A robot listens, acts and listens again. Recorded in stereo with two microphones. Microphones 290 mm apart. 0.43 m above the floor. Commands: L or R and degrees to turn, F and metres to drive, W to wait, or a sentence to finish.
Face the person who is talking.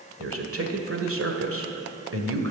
R55
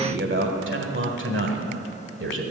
R55
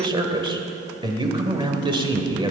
R20
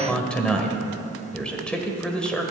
Found it: a man speaking, straight ahead.